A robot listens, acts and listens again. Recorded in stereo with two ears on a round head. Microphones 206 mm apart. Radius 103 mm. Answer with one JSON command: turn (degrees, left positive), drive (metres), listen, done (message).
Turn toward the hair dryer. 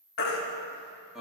{"listen": true}
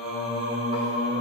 {"listen": true}
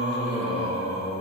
{"done": "I can't make out a hair dryer to turn to."}